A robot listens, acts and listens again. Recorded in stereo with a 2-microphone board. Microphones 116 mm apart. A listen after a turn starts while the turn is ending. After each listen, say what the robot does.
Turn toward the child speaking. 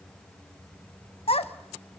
Turn 60° left.
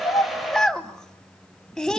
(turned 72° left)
Facing the child speaking.